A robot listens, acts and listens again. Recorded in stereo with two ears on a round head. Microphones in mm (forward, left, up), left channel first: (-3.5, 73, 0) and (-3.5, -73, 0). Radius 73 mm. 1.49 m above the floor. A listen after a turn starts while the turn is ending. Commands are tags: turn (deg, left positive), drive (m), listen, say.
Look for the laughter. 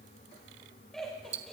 <turn deg="30"/>
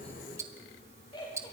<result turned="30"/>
<turn deg="150"/>
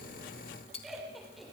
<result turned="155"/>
<say>Facing the laughter.</say>